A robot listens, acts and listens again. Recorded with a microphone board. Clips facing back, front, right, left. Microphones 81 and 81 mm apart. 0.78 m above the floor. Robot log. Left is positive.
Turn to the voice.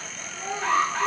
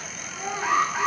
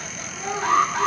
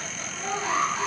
end: Found it: a child speaking, straight ahead.